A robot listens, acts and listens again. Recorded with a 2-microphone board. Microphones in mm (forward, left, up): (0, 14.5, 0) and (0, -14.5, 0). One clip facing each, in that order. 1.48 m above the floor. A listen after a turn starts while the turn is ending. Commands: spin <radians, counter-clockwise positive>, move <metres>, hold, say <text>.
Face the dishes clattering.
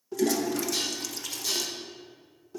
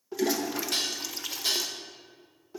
spin -1.22
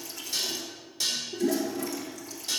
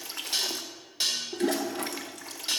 spin -0.70
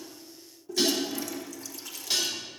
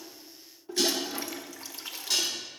spin 0.17
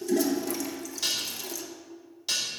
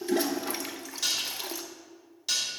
say Facing the dishes clattering.